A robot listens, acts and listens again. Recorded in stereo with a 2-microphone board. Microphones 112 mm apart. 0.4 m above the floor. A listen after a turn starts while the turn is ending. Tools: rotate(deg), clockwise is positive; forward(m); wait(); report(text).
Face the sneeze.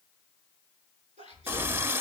rotate(90)
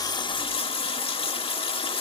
report("I heard a sneeze from this way, but can't make it out now.")